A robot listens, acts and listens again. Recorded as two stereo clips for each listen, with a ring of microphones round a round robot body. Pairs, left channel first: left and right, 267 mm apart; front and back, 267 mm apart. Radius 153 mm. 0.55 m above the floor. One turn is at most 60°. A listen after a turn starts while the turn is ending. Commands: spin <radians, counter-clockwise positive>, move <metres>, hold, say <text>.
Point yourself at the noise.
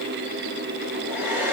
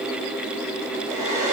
spin -1.05
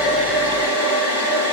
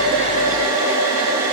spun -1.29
spin -1.05
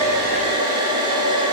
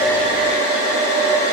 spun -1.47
spin -0.26
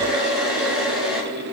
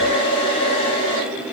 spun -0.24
say Found it: a hair dryer, straight ahead.